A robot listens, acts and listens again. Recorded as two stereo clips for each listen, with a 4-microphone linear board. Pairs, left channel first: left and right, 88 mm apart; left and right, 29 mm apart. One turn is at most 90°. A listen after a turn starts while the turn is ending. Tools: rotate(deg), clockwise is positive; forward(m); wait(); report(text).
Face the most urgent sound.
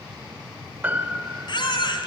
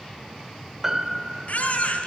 rotate(-60)
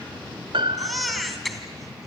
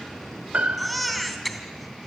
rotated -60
report("Found it: a baby crying, straight ahead, 2 to 4 m away.")